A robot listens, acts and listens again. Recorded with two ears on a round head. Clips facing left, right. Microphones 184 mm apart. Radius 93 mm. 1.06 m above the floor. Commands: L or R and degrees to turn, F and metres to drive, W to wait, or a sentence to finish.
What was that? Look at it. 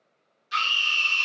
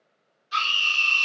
L25
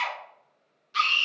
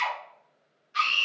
L125
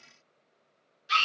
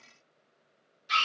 L10
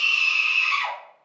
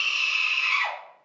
Found it: a scream, straight ahead.